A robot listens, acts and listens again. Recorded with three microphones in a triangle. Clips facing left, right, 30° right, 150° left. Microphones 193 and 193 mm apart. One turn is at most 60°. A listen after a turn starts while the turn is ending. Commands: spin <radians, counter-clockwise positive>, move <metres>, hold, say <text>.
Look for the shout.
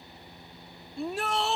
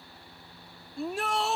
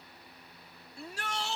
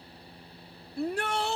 spin 1.05
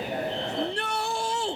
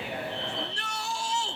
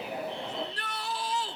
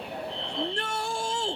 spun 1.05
spin 1.05
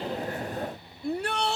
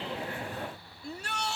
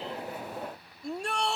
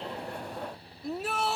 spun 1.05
spin 1.05
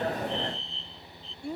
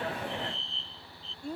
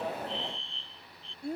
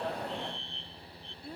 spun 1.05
spin 0.17
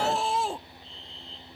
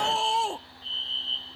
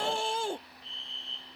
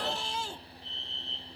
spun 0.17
say Found it: a shout, straight ahead.